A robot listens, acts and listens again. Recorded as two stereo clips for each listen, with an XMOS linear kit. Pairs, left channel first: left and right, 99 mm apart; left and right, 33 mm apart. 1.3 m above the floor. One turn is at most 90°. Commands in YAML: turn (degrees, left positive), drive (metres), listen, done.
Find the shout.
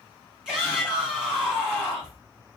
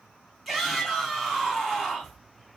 turn: -30
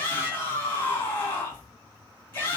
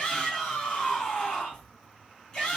turn: 20
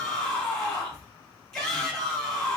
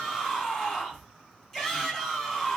done: "Facing the shout, 2 to 4 m away."